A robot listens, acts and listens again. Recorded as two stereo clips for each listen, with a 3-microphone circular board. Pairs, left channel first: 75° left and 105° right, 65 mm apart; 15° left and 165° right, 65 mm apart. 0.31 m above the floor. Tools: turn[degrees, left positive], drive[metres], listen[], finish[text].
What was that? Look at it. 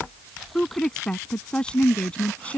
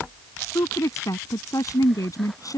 Action: finish[Facing the woman speaking.]